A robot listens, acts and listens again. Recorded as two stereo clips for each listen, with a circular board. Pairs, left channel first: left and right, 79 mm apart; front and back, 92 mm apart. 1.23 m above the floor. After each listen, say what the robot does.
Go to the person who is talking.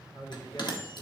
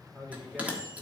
Turn 75° left.
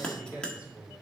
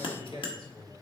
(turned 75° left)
Turn 20° right.
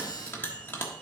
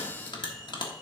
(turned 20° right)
Keep listening.
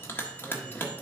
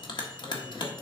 Keep listening.
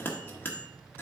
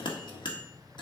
Facing where the man speaking came from. I can't hear it now. I did not reach it.